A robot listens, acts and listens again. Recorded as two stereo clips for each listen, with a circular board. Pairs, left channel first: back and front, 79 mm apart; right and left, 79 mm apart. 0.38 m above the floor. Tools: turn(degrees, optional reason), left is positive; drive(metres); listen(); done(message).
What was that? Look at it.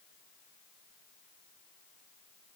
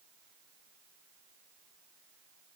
listen()
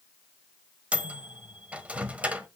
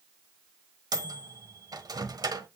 turn(degrees=70, reason="The microwave: 70° left.")
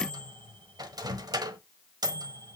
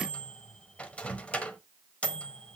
turn(degrees=-15, reason="The microwave is now 15° right.")
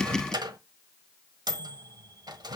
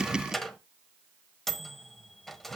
done("Facing the microwave, 1 to 2 m away.")